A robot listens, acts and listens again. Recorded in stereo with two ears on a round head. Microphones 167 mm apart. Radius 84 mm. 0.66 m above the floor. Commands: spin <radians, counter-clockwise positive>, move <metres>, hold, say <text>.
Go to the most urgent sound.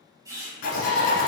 spin 0.70
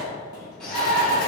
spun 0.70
move 1.0
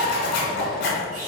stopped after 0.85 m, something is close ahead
say I am next to the shout.